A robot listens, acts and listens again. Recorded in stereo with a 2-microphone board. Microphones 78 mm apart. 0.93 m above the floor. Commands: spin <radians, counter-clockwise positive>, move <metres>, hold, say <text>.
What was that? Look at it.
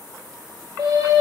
spin -1.22
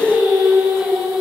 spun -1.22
spin -0.17
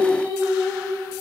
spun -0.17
say Found it: singing, straight ahead, over 4 m away.